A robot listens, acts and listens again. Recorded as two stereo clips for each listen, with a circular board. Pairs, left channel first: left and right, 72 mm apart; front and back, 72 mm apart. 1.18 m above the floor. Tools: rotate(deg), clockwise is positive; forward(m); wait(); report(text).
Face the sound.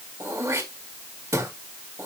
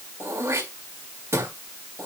rotate(130)
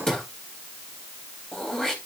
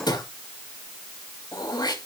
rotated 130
rotate(-10)
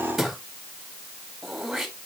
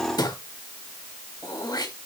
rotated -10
report("Facing the throat clearing.")